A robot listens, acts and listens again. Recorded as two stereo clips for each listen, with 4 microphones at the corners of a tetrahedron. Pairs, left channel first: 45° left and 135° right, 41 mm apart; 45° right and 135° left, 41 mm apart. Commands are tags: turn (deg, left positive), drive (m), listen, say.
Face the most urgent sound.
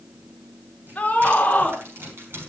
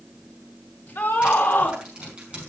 <turn deg="-15"/>
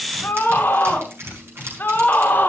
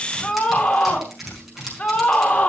<say>Facing the scream.</say>